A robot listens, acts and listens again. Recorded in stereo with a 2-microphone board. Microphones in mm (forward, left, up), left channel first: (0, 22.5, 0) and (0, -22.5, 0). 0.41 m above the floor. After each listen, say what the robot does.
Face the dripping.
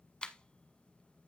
Keep listening.
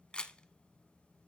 Keep listening.
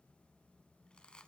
I can't make out dripping, only a camera shutter.